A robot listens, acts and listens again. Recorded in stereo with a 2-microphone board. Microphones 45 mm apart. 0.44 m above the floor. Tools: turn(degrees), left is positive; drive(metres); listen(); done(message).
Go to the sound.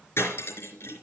turn(degrees=75)
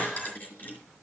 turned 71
turn(degrees=35)
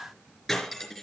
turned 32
drive(metres=1.0)
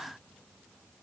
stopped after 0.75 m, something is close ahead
listen()
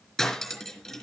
done("Something is in my way. I am facing the cutlery clinking but have not reached it.")